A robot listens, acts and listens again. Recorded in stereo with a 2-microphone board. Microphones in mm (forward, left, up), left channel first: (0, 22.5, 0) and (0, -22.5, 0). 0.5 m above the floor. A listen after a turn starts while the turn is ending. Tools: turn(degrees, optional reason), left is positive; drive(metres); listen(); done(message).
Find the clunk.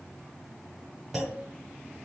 turn(degrees=-30)
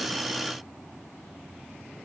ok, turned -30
listen()
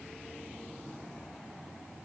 done("I heard a clunk, but can't make it out now. It was about 25° left or 145° right.")